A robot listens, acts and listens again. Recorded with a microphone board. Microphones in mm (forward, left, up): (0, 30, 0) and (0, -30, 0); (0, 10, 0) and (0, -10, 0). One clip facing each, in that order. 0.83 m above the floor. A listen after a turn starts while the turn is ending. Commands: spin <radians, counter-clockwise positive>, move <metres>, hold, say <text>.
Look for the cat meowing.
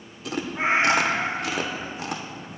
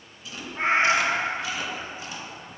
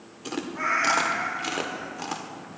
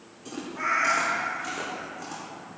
spin 0.52
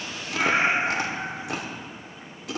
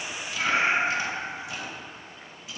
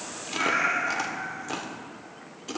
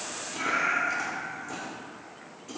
spin 2.53
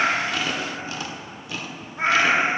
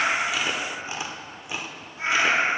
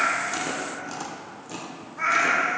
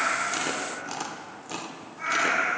spin 0.96
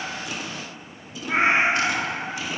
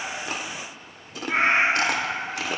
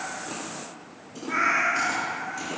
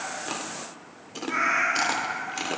say Facing the cat meowing, 1 to 2 m away.